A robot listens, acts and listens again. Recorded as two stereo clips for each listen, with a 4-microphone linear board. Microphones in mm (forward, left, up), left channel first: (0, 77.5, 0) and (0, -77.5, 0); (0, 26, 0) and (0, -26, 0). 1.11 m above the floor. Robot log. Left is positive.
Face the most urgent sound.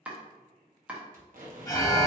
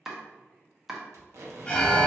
note: The alarm: about 20° left or 160° left.
cmd yaw +20
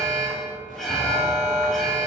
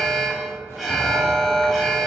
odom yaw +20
end: Facing the alarm.